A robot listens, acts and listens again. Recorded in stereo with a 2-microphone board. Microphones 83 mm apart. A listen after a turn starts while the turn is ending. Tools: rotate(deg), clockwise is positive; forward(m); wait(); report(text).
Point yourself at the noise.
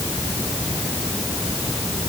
wait()
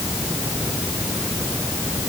wait()
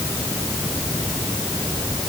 report("I can't make out anything to turn to.")